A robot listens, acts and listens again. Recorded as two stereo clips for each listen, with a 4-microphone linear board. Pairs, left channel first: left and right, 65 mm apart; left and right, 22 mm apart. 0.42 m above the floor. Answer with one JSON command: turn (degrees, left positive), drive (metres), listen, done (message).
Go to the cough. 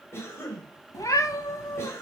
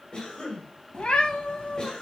{"turn": 40}
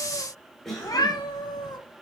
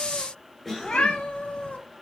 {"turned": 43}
{"drive": 1.0}
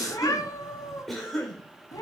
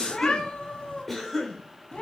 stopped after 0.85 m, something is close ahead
{"done": "Arrived at the cough, straight ahead."}